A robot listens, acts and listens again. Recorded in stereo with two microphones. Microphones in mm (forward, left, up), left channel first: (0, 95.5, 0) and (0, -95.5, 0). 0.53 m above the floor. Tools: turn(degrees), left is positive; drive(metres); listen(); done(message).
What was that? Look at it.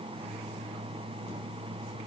listen()
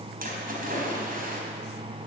turn(degrees=-50)
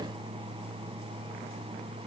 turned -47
listen()
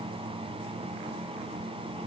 done("I heard a splash, but can't make it out now. It was about 5° right or 85° right.")